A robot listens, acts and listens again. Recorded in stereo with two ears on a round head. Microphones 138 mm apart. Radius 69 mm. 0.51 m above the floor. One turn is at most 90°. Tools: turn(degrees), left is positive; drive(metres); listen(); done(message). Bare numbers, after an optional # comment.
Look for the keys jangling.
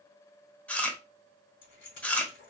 turn(90)
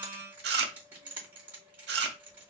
# So it is at 15° right.
turn(-15)
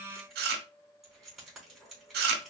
done("Found it: keys jangling, straight ahead, 2 to 4 m away.")